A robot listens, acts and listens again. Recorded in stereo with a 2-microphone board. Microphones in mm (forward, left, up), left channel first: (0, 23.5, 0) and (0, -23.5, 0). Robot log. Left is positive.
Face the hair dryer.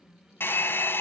note: The hair dryer: about 50° left or 130° left.
cmd yaw +50
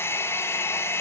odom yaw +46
note: So it is at 70° left.
cmd yaw +70
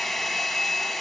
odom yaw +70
end: Found it: a hair dryer, straight ahead.